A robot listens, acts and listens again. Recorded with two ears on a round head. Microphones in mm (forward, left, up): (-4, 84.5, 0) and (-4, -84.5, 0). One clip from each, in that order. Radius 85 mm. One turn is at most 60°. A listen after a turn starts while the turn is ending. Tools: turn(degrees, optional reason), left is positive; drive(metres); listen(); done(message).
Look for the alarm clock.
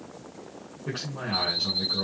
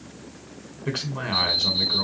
turn(degrees=-15, reason="The alarm clock: about 15° right or 165° right.")
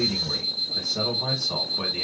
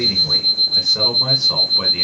done("Found it: an alarm clock, straight ahead, 2 to 4 m away.")